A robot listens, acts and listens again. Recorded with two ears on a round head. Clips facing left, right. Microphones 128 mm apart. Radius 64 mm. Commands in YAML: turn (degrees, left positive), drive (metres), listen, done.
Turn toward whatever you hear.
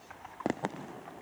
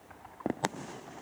listen: true
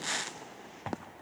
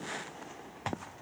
listen: true
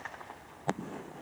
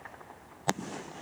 done: "I can't make out anything to turn to."